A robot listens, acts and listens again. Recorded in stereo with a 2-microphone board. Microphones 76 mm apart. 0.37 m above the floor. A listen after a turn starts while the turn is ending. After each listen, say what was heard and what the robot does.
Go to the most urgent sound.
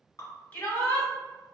The shout: about 25° left or 155° left. Turn 25° left.
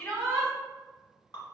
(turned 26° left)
Drive 1.0 m forward.
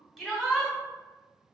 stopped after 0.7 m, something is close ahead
I am next to the shout.